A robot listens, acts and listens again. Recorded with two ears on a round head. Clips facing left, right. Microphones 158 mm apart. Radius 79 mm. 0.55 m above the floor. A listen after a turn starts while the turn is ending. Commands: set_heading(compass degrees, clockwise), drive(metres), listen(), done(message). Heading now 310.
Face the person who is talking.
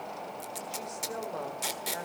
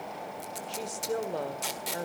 set_heading(345)
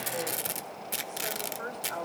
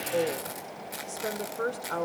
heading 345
set_heading(90)
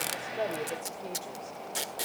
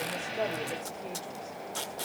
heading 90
listen()
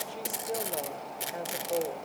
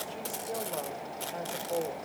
set_heading(75)
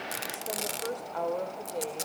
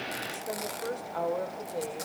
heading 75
done("Facing the woman speaking.")